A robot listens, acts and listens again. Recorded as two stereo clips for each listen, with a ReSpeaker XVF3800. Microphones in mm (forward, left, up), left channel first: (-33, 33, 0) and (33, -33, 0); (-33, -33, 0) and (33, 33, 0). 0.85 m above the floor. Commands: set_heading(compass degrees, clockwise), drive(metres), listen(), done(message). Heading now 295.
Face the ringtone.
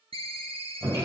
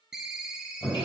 set_heading(335)
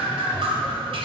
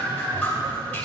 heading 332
listen()
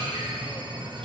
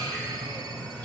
listen()
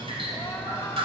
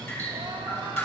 done("I heard a ringtone from this way, but can't make it out now.")